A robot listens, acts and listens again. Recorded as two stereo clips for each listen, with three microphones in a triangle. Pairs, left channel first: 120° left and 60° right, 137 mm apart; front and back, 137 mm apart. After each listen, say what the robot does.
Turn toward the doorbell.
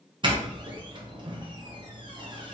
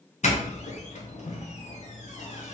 Turn 10° right.
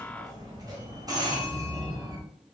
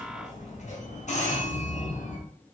Facing the doorbell.